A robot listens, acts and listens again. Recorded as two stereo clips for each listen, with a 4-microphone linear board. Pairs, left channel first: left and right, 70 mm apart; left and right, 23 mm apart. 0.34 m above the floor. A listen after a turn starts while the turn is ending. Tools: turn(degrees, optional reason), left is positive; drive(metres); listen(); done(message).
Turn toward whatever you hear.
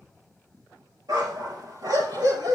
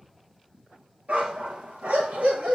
turn(degrees=-90)
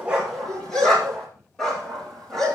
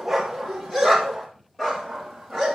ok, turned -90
done("Facing the dog barking, over 4 m away.")